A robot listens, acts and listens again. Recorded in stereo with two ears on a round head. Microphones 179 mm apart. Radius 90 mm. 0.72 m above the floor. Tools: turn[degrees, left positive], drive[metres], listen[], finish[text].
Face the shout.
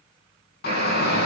Thought: The shout: about 50° left or 130° left.
Action: turn[50]
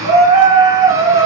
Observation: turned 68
Thought: So it is at 15° right.
Action: turn[-15]
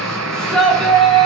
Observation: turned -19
Action: finish[Facing the shout, over 4 m away.]